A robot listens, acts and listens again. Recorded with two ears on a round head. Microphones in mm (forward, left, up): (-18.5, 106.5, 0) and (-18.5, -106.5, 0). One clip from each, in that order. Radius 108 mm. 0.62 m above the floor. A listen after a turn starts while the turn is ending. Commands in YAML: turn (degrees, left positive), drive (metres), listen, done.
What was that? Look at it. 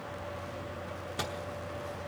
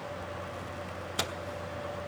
turn: -25
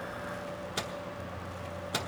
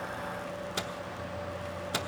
done: "Facing the microwave, under 1 m away."